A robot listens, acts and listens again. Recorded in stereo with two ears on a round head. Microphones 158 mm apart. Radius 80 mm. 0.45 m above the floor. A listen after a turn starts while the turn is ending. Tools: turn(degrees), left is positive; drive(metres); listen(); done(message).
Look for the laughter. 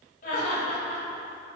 turn(degrees=45)
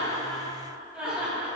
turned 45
turn(degrees=-10)
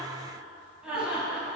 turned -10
done("Facing the laughter, over 4 m away.")